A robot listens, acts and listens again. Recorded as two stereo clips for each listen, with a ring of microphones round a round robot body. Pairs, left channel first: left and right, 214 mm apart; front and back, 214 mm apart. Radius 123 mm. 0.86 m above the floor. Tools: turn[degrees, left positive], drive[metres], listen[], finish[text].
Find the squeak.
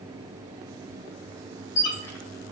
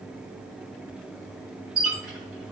Thought: The squeak: 90° left.
Action: turn[90]
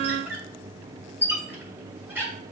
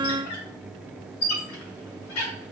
Thought: The squeak is now 10° right.
Action: turn[-10]
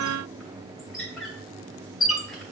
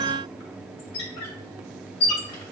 Action: finish[Found it: a squeak, straight ahead, 1 to 2 m away.]